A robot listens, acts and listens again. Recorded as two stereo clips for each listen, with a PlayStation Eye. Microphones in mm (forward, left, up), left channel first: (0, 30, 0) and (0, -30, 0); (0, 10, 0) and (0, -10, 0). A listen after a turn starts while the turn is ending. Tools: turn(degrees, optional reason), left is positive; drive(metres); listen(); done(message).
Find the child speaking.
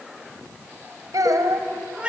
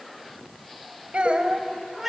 turn(degrees=-90)
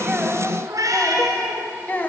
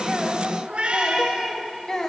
turn(degrees=30, reason="So it is at 30° left.")
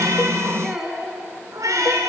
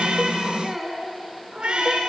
done("Found it: a child speaking, straight ahead, 2 to 4 m away.")